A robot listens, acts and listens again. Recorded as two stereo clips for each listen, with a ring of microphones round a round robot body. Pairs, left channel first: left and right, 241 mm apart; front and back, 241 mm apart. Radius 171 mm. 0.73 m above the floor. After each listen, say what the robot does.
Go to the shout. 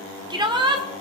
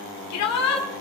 Turn 20° right.
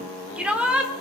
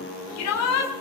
Drive 1.0 m forward.
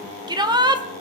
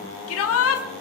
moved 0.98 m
Turn 20° right.
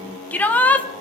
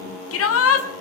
Drive 1.0 m forward.
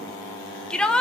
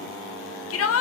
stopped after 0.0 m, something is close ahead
I am next to the shout.